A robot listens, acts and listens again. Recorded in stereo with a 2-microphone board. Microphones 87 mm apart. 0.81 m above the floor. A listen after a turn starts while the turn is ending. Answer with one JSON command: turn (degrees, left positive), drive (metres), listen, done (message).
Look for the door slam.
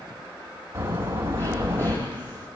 {"turn": -30}
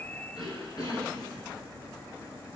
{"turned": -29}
{"listen": true}
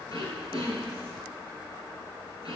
{"done": "I heard a door slam, but can't make it out now. It was about straight ahead or 120° right."}